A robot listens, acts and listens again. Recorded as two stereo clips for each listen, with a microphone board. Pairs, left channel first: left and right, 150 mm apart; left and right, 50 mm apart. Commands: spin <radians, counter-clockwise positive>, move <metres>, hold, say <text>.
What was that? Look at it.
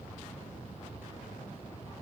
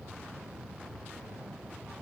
hold
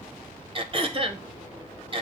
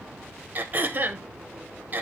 spin -0.61
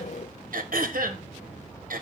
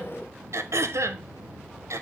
spin -1.92
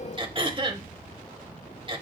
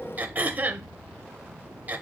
spin -0.61
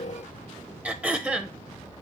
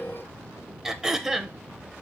spin -0.17
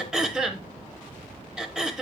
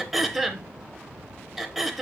say Facing the throat clearing.